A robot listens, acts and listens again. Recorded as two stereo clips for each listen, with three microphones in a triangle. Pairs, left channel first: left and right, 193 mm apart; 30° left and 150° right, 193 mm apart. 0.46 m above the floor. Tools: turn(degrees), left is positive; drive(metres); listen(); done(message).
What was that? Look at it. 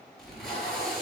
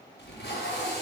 done("Found it: tape being pulled, straight ahead.")